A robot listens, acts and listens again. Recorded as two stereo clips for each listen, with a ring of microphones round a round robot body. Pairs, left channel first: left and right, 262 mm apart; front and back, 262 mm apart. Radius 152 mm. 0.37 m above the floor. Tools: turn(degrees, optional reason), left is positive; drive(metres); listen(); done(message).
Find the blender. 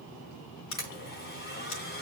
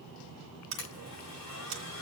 turn(degrees=40, reason="The blender: 40° left.")
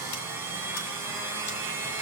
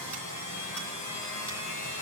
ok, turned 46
turn(degrees=-10, reason="The blender is now 10° right.")
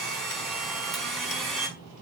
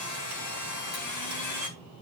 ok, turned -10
done("Found it: a blender, straight ahead.")